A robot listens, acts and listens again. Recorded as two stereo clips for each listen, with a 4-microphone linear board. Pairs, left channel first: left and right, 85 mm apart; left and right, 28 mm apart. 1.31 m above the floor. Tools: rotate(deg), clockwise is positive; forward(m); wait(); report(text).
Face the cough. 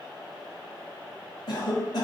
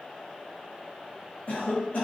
rotate(-55)
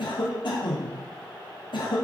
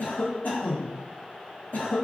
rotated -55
rotate(-65)
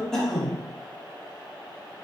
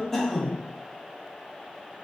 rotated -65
report("Found it: a cough, straight ahead, under 1 m away.")